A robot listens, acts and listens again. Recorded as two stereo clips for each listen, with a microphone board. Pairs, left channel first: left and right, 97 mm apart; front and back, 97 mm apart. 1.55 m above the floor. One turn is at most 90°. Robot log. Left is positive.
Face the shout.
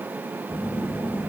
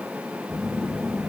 cmd idle
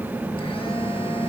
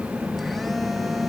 cmd idle
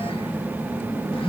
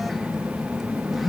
end: I can't make out a shout, only a phone buzzing.